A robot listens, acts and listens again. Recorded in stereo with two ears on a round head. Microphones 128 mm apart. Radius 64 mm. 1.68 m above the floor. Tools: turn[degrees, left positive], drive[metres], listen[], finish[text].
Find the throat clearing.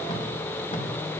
Action: listen[]
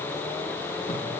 Action: listen[]
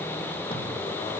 Action: finish[I can't make out throat clearing to turn to.]